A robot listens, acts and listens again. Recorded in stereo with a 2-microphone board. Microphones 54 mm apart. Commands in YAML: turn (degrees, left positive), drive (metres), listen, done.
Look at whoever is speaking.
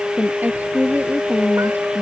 turn: -35
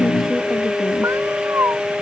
listen: true
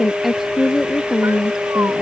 done: "Facing the woman speaking."